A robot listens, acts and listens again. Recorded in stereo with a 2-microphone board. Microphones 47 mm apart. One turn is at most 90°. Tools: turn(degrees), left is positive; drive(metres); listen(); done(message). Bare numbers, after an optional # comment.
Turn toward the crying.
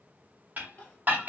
# The crying: about 35° left or 145° left.
turn(35)
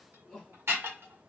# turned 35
done("Found it: crying, straight ahead.")